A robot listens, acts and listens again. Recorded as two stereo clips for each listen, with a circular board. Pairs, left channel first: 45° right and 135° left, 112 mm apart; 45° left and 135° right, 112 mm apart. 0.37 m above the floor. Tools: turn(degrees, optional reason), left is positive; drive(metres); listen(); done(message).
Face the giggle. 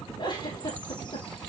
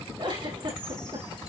turn(degrees=-95, reason="The giggle: 95° right.")
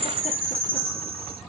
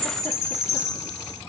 listen()
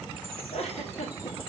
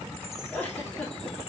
turn(degrees=-30, reason="The giggle is now 30° right.")
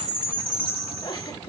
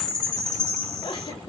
done("Found it: a giggle, straight ahead, over 4 m away.")